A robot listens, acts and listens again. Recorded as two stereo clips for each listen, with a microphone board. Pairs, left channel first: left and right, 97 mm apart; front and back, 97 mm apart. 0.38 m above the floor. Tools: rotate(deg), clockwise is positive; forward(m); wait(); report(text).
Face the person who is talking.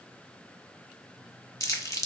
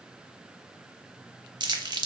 wait()
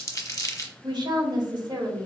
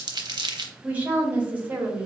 rotate(110)
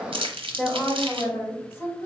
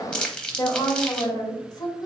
rotate(-30)
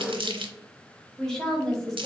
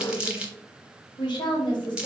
report("Facing the woman speaking, 1 to 2 m away.")